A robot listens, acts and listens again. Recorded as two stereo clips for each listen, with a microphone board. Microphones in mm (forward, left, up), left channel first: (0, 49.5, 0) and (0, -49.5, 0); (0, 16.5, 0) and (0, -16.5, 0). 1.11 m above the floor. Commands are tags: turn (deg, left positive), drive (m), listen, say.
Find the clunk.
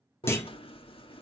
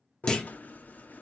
<turn deg="25"/>
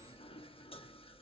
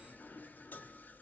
<listen/>
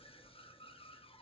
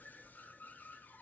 <say>I heard a clunk, but can't make it out now. It was about straight ahead or 130° left.</say>